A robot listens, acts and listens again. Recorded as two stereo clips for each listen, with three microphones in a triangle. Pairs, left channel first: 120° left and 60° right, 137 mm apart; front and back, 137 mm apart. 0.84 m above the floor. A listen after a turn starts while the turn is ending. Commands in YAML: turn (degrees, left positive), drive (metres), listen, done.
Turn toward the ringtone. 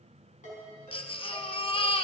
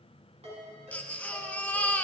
turn: 145
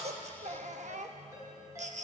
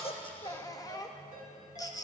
done: "Found it: a ringtone, straight ahead, over 4 m away."